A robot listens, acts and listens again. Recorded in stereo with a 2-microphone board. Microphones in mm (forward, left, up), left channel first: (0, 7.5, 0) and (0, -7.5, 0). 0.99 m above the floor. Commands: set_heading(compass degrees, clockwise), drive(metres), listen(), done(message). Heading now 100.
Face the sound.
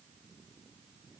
listen()
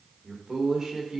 set_heading(145)
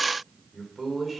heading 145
set_heading(155)
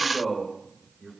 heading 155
set_heading(170)
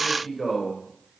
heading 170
done("Facing the man speaking, 2 to 4 m away.")